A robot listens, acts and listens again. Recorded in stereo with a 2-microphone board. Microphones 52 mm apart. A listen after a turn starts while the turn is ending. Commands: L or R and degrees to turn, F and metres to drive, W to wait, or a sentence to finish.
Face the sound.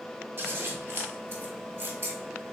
R45
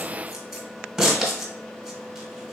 Found it: scissors, straight ahead, 1 to 2 m away.